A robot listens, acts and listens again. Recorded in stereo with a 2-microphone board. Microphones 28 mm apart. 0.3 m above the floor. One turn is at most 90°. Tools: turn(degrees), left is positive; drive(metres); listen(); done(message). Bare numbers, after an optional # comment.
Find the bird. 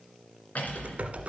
listen()
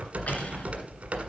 listen()
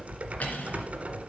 done("I can't make out a bird to turn to.")